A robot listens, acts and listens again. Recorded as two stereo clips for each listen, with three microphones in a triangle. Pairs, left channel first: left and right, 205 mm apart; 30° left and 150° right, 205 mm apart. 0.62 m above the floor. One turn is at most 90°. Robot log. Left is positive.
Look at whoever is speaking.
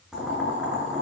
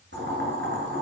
cmd idle
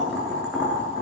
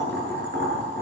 cmd idle
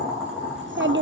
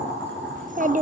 note: The child speaking: 100° right.
cmd yaw -90
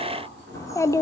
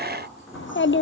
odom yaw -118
note: The child speaking is now 15° left.
cmd yaw +15
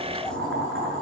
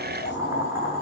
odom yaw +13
cmd idle
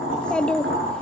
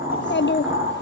end: Facing the child speaking, under 1 m away.